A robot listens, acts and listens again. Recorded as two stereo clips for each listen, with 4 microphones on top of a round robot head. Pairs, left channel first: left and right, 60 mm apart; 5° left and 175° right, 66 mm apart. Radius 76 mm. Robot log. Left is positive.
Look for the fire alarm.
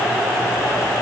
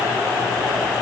cmd idle
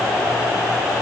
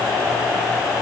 cmd idle
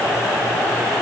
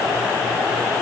end: I can't make out a fire alarm to turn to.